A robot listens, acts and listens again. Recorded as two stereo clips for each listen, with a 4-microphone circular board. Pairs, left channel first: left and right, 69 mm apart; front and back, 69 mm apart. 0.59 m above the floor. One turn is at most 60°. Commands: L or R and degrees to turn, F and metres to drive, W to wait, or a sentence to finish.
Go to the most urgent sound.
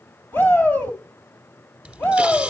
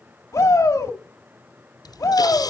L30
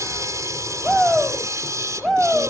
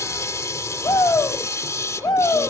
F1.0
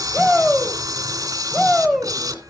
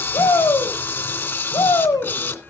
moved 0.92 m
F1.0
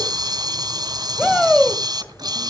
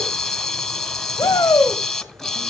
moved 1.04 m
F1.0
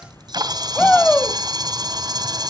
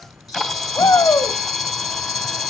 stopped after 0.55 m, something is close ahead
L15
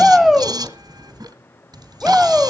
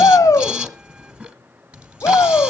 Arrived at the shout, straight ahead.